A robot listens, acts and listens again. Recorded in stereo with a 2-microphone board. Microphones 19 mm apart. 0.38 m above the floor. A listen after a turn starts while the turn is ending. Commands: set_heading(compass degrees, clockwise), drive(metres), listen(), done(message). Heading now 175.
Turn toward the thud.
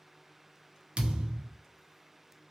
set_heading(245)
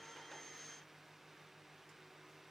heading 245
listen()
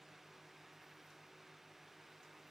done("I heard a thud, but can't make it out now. It was about straight ahead or 40° right.")